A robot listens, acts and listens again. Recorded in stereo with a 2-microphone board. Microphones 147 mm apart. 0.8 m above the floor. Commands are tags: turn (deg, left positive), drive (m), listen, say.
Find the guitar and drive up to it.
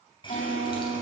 <turn deg="60"/>
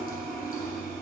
<listen/>
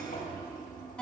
<turn deg="10"/>
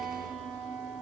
<drive m="1.0"/>
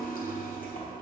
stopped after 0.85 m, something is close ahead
<listen/>
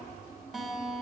<say>I am next to the guitar.</say>